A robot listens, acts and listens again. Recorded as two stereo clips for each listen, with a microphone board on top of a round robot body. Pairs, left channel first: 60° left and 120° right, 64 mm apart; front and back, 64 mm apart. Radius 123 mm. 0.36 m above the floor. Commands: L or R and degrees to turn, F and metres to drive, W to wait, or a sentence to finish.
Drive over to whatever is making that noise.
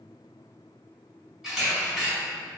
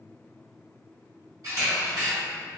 L155
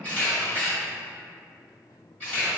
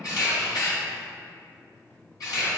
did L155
R10
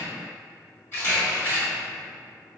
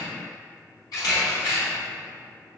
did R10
F1.0
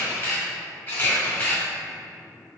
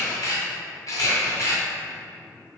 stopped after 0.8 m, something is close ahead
I am next to the camera shutter.